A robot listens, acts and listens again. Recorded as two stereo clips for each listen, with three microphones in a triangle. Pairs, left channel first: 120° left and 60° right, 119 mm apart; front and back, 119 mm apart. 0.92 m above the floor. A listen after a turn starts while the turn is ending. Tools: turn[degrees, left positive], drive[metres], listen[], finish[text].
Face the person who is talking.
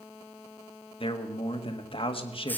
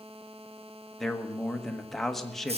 Thought: The man speaking: 90° left.
Action: turn[90]
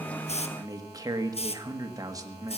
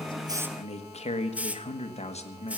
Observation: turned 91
Action: finish[Facing the man speaking, 1 to 2 m away.]